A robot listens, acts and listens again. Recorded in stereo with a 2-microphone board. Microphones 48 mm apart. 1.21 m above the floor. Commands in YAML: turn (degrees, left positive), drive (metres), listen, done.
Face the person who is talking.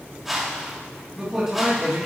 turn: -15
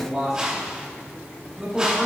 turn: -30
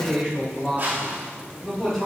turn: 15
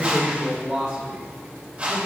done: "Found it: a man speaking, straight ahead, over 4 m away."